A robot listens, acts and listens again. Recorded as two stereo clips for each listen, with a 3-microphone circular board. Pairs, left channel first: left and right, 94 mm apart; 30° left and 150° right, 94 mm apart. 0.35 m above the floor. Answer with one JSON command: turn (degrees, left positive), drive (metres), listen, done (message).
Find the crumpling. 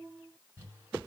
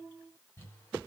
{"turn": -25}
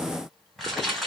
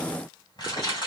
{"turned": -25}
{"done": "Found it: crumpling, straight ahead, 2 to 4 m away."}